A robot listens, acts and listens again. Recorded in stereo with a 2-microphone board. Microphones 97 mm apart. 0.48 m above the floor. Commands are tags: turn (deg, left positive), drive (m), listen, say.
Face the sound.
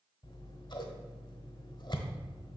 <turn deg="55"/>
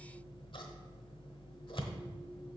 <turn deg="65"/>
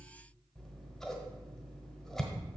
<say>Facing the scissors, 1 to 2 m away.</say>